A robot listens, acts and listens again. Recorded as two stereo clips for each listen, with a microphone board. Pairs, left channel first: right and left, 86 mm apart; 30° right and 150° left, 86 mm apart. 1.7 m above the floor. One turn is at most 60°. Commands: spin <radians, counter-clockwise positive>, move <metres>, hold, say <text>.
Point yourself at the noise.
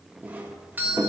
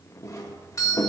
spin 0.35
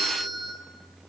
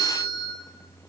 say Facing the doorbell, 1 to 2 m away.